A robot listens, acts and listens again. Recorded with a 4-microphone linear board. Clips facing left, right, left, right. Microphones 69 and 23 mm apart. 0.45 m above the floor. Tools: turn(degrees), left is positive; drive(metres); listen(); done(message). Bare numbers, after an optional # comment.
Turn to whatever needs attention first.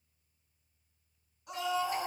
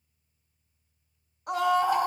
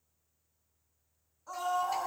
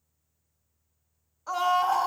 # The scream: about 65° right or 115° right.
turn(-65)
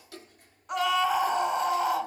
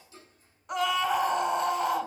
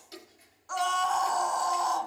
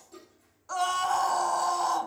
done("Facing the scream.")